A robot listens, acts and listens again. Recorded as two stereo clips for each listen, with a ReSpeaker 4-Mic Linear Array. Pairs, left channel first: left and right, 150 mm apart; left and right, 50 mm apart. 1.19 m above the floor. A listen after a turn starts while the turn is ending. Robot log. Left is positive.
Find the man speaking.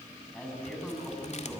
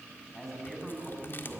cmd yaw +30
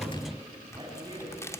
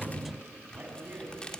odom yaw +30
note: So it is at 30° right.
cmd yaw -30
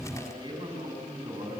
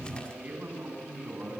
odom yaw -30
note: The man speaking is now 35° right.
cmd yaw -35
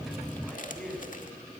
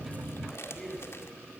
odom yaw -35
end: Facing the man speaking, over 4 m away.